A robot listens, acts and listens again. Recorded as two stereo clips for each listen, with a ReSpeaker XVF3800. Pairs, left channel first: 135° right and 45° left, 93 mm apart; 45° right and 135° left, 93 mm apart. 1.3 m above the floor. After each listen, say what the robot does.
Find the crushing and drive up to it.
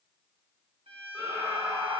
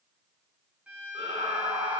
Keep listening.
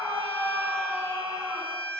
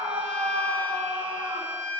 Keep listening.
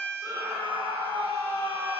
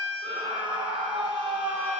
I can't make out crushing to turn to.